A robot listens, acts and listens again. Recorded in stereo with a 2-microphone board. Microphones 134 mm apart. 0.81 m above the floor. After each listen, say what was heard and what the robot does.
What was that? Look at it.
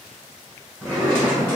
Turn 30° left.
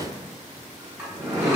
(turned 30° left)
So it is at 20° right. Turn 20° right.
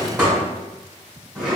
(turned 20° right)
Facing the drawer, 1 to 2 m away.